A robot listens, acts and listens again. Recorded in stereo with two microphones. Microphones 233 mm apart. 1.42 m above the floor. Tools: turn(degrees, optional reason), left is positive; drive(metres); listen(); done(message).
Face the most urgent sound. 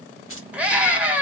turn(degrees=-30)
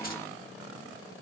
listen()
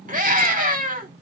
turn(degrees=-145, reason="So it is at 145° right.")
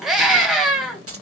done("Found it: a scream, straight ahead.")